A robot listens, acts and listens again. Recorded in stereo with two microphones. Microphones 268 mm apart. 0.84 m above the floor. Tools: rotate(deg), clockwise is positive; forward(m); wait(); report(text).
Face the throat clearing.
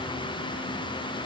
wait()
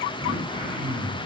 rotate(20)
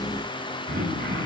rotate(140)
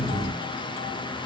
wait()
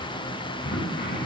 rotate(-35)
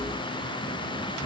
rotate(15)
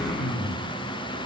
report("Found it: throat clearing, straight ahead.")